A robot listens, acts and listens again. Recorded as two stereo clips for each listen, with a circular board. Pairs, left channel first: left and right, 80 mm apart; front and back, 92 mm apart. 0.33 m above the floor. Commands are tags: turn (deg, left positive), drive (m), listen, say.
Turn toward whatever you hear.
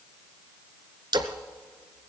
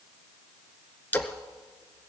<turn deg="-70"/>
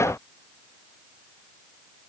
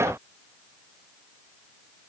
<say>Facing where the splash came from. I can't hear it now.</say>